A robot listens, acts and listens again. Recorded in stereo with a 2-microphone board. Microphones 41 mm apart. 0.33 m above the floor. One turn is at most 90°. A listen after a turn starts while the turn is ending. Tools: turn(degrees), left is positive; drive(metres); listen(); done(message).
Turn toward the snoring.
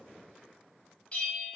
listen()
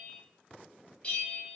listen()
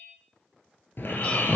turn(degrees=60)
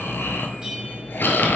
turn(degrees=60)
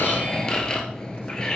turn(degrees=20)
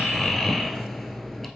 done("Found it: snoring, straight ahead.")